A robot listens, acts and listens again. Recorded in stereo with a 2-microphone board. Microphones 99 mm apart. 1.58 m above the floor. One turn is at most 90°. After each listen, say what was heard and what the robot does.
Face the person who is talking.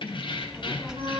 Turn 30° right.
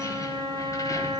Keep listening.
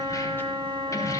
Keep listening.
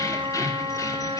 I heard a child speaking, but can't make it out now. It was about 25° left or 145° right.